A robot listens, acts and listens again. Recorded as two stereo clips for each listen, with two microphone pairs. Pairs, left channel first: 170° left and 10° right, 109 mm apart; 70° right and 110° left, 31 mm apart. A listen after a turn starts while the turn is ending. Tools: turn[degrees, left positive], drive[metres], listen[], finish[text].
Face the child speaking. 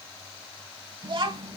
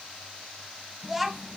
Thought: The child speaking: 25° left.
Action: turn[25]
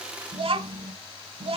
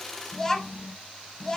Action: finish[Facing the child speaking, 1 to 2 m away.]